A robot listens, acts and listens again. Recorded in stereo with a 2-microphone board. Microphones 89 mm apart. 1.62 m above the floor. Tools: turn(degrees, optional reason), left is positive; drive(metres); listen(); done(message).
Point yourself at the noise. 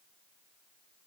listen()
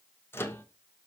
turn(degrees=25, reason="The microwave: about 25° left or 155° left.")
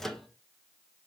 done("Found it: a microwave, straight ahead, 1 to 2 m away.")